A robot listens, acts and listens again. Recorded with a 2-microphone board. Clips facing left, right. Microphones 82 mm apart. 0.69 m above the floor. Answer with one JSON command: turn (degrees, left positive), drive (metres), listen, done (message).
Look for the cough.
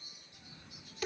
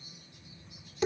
{"turn": 90}
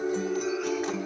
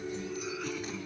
{"listen": true}
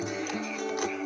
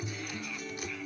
{"listen": true}
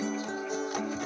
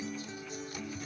{"done": "I heard a cough from this way, but can't make it out now."}